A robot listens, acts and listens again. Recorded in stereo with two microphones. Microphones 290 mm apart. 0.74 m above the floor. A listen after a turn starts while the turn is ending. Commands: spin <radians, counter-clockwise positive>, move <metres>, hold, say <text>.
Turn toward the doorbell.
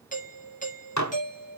spin 0.44
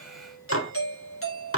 spin 2.18
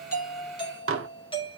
spin 0.35
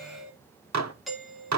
say Facing the doorbell, 2 to 4 m away.